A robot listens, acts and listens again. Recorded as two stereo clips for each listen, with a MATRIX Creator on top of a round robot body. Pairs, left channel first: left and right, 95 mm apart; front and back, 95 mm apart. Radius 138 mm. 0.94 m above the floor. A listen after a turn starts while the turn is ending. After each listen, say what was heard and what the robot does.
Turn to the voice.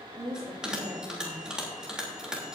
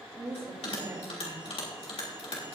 The woman speaking: 140° right. Turn 140° right.
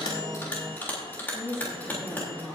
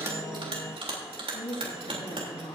The woman speaking is now 25° left. Turn 25° left.
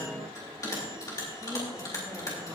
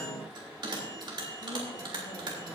Keep listening.
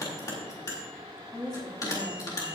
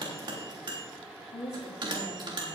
The woman speaking is now 10° left. Turn 10° left.
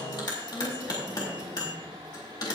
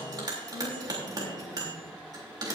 Keep listening.
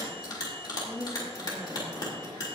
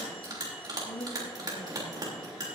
Facing the woman speaking, 2 to 4 m away.